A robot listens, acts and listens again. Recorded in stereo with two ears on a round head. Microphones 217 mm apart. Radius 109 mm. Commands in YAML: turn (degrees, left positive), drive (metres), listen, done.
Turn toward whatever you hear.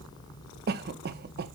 turn: -45
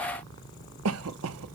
turn: -85
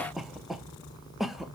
done: "Found it: a cough, straight ahead."